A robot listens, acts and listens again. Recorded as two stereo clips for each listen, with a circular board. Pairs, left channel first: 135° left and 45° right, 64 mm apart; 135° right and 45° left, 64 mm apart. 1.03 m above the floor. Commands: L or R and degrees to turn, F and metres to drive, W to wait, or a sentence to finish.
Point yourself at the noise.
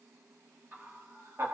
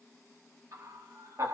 Found it: laughter, straight ahead, 1 to 2 m away.